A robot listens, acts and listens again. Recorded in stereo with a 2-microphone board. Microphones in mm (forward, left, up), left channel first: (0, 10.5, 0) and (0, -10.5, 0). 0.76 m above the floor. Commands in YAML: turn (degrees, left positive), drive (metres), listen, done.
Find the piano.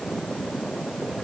listen: true
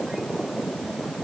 listen: true
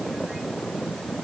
done: "I can't make out a piano to turn to."